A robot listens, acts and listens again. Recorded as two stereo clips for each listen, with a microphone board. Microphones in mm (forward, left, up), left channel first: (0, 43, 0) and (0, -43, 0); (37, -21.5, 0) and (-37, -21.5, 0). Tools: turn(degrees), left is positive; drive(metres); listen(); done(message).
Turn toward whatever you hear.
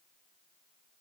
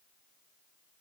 listen()
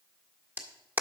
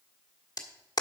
turn(degrees=-25)
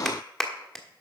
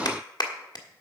done("Facing the clap, 1 to 2 m away.")